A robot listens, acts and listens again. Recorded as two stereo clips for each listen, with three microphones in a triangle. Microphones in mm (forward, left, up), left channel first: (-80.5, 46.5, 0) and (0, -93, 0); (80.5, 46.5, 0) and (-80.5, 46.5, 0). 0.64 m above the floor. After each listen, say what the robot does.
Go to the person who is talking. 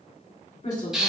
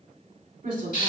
Turn 155° left.
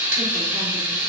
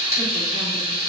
Keep listening.
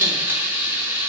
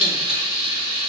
Keep listening.
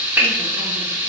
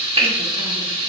I heard a woman speaking from this way, but can't make it out now. I did not reach it.